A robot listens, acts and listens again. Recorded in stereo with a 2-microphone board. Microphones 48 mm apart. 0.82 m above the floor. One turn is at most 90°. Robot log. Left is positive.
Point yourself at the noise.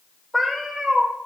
cmd yaw -30
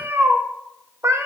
note: So it is at 95° right.
cmd yaw -90
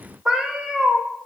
note: The cat meowing is now 10° right.
cmd yaw -10
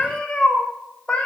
note: The cat meowing is now 15° left.
cmd yaw +15
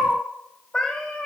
end: Facing the cat meowing.